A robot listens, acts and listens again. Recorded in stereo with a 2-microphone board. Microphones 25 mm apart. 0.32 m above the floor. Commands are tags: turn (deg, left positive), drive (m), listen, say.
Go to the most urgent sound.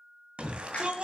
<turn deg="-45"/>
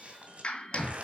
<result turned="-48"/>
<turn deg="-80"/>
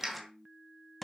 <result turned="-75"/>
<drive m="1.0"/>
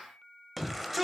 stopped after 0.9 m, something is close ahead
<say>I am next to the shout.</say>